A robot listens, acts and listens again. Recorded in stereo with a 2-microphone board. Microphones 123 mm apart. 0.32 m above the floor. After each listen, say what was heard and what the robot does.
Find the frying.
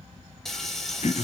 Turn 30° left.
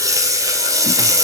So it is at 30° right. Turn 30° right.
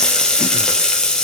Found it: frying, straight ahead, 2 to 4 m away.